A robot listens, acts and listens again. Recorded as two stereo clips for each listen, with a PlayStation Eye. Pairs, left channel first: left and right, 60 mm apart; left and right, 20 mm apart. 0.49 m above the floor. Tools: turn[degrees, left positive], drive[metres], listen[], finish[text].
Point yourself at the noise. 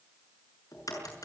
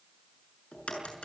Action: turn[90]
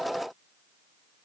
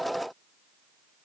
Action: finish[Facing where the crack came from. I can't hear it now.]